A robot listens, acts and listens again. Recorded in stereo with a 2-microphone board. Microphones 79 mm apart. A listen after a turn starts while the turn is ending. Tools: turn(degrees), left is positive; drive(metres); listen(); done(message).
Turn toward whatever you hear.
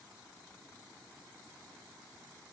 listen()
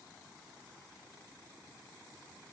listen()
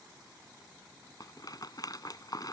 turn(degrees=55)
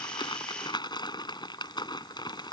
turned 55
turn(degrees=75)
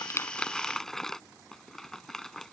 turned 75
done("Facing the rattle.")